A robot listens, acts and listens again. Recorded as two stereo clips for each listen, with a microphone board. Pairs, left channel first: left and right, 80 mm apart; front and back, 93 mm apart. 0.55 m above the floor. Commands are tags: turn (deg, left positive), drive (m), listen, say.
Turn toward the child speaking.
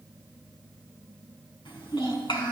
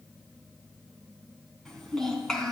<turn deg="85"/>
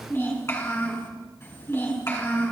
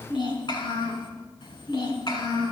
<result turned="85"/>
<turn deg="35"/>
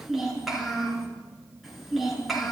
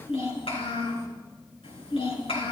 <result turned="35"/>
<say>Facing the child speaking.</say>